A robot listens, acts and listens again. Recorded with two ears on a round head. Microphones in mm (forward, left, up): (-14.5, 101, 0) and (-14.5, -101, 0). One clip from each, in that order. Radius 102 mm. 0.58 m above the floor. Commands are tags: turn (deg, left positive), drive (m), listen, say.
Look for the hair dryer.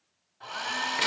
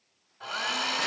<turn deg="-20"/>
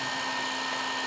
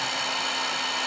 <turn deg="-140"/>
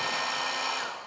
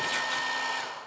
<turn deg="20"/>
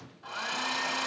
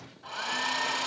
<say>Facing the hair dryer, 1 to 2 m away.</say>